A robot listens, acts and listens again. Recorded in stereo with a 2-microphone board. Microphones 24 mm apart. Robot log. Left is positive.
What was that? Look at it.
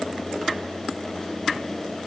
cmd idle
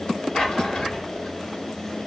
note: The drawer: about 35° left or 145° left.
cmd yaw +35
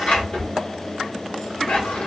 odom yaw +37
note: So it is at 105° left.
cmd yaw +105
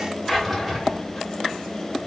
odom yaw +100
end: Facing the drawer.